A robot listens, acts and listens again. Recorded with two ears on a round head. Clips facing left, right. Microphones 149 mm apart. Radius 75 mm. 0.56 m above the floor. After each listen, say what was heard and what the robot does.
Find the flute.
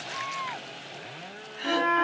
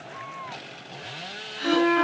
The flute: about 45° right or 135° right. Turn 45° right.
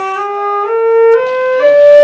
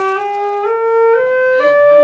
Facing the flute, 2 to 4 m away.